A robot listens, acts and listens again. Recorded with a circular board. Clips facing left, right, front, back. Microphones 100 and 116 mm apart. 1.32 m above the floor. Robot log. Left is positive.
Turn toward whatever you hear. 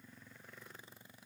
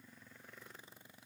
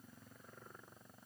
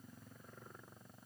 cmd idle
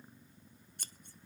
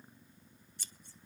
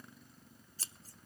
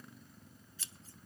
note: The scissors: 50° left.
cmd yaw +50
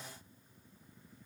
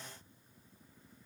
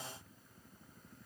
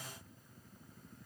cmd idle
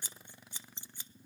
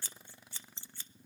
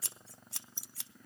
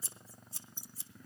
note: The scissors is now 15° left.
cmd yaw +15
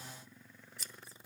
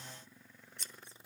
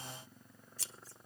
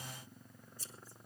end: Found it: scissors, straight ahead, under 1 m away.